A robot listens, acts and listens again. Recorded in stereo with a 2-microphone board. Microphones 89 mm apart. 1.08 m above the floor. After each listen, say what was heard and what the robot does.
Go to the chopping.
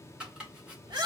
Turn 30° right.
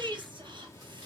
Keep listening.
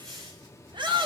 Keep listening.
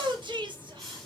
I heard chopping, but can't make it out now. It was about 20° left or 140° right. I did not reach it.